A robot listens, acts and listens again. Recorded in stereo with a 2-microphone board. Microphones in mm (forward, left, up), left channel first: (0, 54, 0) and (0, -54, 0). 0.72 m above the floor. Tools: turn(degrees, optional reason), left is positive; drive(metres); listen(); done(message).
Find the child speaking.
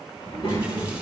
turn(degrees=70, reason="The child speaking: about 70° left or 110° left.")
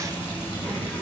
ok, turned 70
turn(degrees=20, reason="So it is at 20° left.")
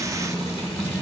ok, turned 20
turn(degrees=20, reason="The child speaking is now 20° left.")
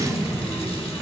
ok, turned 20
turn(degrees=10, reason="The child speaking is now 10° left.")
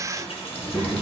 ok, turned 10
turn(degrees=10, reason="The child speaking is now 10° left.")
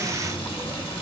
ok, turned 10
done("Found it: a child speaking, straight ahead.")